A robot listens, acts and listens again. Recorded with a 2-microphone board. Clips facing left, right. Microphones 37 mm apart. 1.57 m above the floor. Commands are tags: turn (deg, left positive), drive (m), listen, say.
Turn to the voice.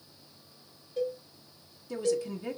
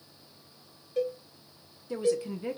<turn deg="-20"/>
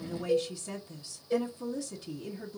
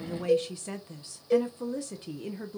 <turn deg="-135"/>
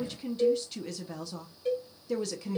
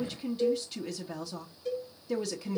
<say>Facing the woman speaking.</say>